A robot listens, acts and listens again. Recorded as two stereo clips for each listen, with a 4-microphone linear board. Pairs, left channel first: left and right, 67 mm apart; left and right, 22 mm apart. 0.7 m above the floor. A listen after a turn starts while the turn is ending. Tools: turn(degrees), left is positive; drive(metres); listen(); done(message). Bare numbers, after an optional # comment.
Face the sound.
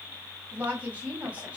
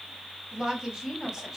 # The woman speaking: about 20° right or 160° right.
turn(-20)
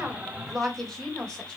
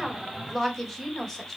# So it is at 10° left.
turn(10)
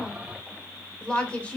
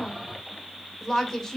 # The woman speaking is now 20° left.
turn(20)
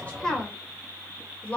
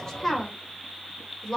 # The woman speaking is now 20° left.
turn(20)
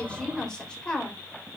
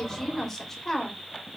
# The woman speaking is now 15° left.
turn(15)
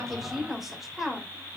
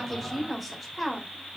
done("Facing the woman speaking.")